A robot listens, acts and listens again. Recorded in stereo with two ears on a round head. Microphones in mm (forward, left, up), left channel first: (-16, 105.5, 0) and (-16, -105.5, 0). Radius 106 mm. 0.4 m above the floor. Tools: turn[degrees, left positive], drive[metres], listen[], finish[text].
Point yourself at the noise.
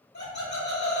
Thought: The laughter: about 45° left or 135° left.
Action: turn[45]
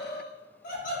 Thought: So it is at 30° left.
Action: turn[30]
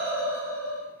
Thought: The laughter is now 15° right.
Action: turn[-15]
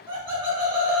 Thought: The laughter is now 30° right.
Action: turn[-30]
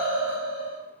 Thought: The laughter is now 35° right.
Action: turn[-35]
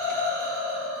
Action: finish[Facing the laughter.]